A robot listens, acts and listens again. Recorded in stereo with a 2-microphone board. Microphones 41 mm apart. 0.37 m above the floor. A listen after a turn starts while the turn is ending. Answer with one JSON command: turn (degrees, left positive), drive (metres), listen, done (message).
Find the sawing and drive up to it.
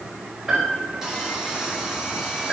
{"turn": -30}
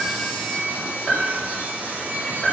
{"turn": -140}
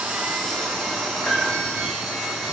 {"drive": 1.0}
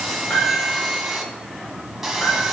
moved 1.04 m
{"drive": 1.0}
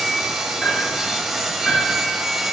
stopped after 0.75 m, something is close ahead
{"turn": -10}
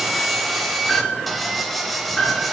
{"done": "I am next to the sawing."}